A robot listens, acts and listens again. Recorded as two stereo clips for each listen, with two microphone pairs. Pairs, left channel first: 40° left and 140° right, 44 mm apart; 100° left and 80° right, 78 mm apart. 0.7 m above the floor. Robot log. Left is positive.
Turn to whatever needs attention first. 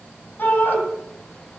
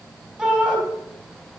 end: Found it: a shout, straight ahead, over 4 m away.